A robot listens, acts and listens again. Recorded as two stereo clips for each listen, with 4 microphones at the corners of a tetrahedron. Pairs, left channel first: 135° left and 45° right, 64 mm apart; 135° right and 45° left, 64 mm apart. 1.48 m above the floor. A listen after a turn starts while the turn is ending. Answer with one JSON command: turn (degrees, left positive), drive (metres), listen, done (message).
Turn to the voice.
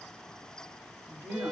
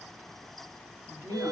{"done": "Facing the woman speaking."}